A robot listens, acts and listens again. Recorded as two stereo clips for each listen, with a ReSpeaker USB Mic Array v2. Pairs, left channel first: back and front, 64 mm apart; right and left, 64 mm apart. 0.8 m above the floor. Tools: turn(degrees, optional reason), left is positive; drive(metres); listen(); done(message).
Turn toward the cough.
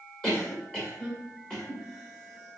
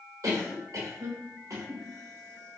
turn(degrees=110, reason="The cough: 110° left.")
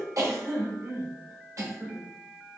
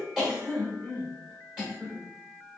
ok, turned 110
turn(degrees=10, reason="The cough is now 10° left.")
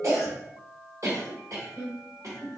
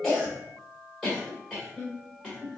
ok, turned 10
done("Found it: a cough, straight ahead.")